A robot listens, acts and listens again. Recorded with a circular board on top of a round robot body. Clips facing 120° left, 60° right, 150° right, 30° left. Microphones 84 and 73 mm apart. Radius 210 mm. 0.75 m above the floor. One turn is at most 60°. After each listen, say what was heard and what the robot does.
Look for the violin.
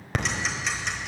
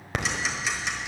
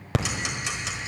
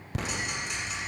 Keep listening.
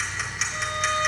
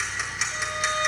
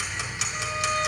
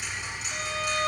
The violin: 25° left. Turn 25° left.
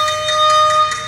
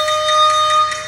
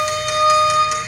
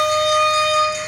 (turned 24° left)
Found it: a violin, straight ahead.